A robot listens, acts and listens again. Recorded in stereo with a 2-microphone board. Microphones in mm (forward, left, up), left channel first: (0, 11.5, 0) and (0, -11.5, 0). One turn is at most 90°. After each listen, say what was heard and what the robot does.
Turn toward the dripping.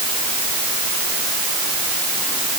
Keep listening.
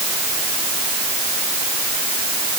Keep listening.
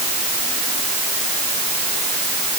I can't make out dripping to turn to.